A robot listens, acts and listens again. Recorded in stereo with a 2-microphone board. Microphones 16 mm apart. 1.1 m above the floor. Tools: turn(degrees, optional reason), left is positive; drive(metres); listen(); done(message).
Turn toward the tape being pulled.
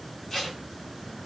turn(degrees=30, reason="The tape being pulled: about 30° left or 150° left.")
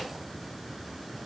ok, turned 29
listen()
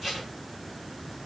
done("Found it: tape being pulled, straight ahead, 1 to 2 m away.")